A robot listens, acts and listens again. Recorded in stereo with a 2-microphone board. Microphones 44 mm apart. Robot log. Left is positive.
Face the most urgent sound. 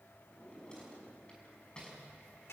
cmd idle
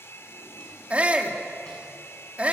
note: The shout: about 30° right or 150° right.
cmd yaw -30
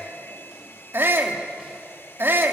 note: So it is at 120° right.
cmd yaw -120
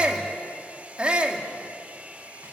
note: The shout is now 25° right.
cmd yaw -25
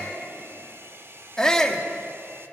note: The shout is now 15° left.
cmd yaw +15
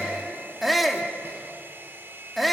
end: Facing the shout, 2 to 4 m away.